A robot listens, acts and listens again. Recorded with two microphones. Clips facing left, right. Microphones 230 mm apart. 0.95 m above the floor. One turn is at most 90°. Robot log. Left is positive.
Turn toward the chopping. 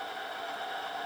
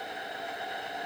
cmd idle
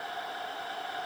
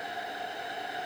cmd idle
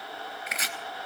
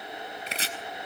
note: The chopping: about 30° right or 150° right.
cmd yaw -30
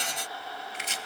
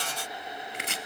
note: So it is at 120° right.
cmd yaw -90
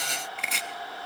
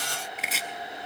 end: Found it: chopping, straight ahead.